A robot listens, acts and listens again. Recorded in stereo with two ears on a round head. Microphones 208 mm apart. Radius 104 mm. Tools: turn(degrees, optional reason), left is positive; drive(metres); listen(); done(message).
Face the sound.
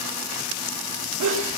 turn(degrees=-90)
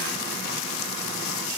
done("Facing where the sneeze came from. I can't hear it now.")